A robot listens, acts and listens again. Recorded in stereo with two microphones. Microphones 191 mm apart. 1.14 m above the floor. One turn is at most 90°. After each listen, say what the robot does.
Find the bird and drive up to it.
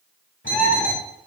Turn 90° left.
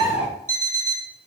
Turn 10° right.
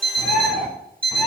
Drive 1.0 m forward.
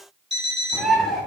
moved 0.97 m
Drive 1.0 m forward.
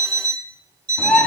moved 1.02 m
Drive 1.0 m forward.
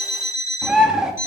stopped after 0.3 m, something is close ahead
I am next to the bird.